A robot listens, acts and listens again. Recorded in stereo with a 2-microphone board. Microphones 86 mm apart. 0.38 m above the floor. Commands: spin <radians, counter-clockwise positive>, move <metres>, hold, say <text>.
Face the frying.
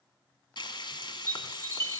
spin 1.05
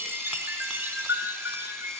hold
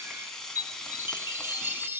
say Facing the frying.